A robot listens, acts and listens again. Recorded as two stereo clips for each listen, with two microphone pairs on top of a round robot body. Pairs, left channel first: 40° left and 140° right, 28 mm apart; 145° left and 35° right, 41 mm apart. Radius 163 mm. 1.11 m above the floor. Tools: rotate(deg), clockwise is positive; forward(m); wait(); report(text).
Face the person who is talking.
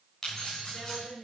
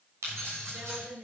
rotate(10)
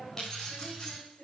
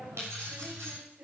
report("Facing the woman speaking, over 4 m away.")